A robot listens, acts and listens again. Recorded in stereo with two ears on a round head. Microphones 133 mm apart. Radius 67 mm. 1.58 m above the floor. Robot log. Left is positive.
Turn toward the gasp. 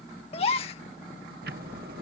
note: The gasp: about 40° left or 140° left.
cmd yaw +40
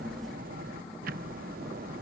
cmd idle
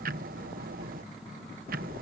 end: I heard a gasp, but can't make it out now. It was about straight ahead or 100° left.